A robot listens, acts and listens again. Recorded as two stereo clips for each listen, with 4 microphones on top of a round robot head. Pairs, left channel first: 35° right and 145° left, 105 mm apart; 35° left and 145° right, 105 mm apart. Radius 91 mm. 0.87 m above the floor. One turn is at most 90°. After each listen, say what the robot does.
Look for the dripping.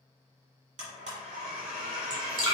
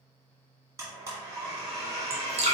Turn 90° right.
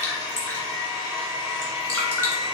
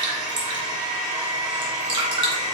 Turn 90° right.
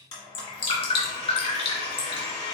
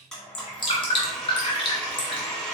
Turn 10° right.
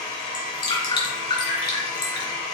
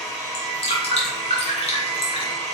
Found it: dripping, straight ahead.